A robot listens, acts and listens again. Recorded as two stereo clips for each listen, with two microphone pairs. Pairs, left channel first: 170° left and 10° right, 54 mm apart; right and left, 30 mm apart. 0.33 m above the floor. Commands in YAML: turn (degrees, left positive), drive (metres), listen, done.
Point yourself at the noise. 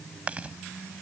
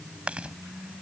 turn: 50
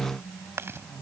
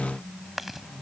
done: "Found it: chewing, straight ahead."